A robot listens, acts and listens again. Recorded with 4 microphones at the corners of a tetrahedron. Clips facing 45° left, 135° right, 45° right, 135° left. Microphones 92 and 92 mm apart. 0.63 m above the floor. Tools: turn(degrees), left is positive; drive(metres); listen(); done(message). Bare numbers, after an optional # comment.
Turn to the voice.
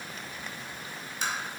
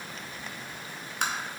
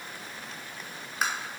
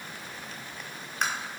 listen()
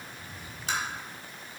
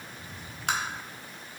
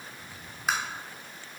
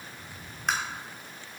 listen()
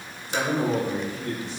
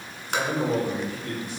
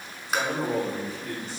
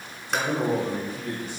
# The man speaking: 105° left.
turn(105)
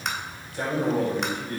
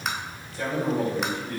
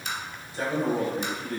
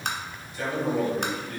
# The man speaking is now 10° left.
turn(10)
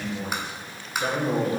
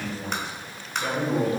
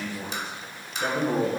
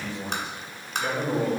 done("Found it: a man speaking, straight ahead, 2 to 4 m away.")